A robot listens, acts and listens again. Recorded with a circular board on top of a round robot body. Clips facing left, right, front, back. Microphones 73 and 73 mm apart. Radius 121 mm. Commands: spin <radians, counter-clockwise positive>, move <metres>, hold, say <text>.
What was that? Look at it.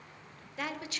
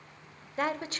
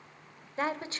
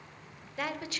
spin -0.87
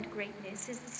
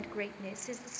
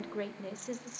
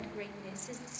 spin -0.17
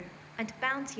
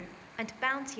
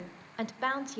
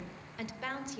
say Found it: a woman speaking, straight ahead.